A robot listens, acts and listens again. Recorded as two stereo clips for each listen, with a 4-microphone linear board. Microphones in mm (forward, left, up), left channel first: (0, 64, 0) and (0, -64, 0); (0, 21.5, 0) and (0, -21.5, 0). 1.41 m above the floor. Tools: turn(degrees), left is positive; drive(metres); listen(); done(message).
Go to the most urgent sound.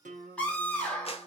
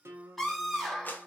turn(degrees=30)
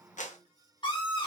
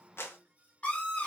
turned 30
turn(degrees=140)
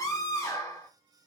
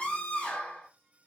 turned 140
turn(degrees=25)
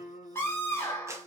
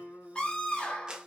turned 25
turn(degrees=20)
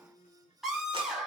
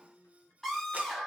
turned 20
drive(metres=1.0)
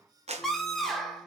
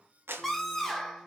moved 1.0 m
drive(metres=1.0)
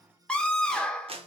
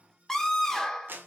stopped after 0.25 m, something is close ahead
done("Arrived at the scream, straight ahead.")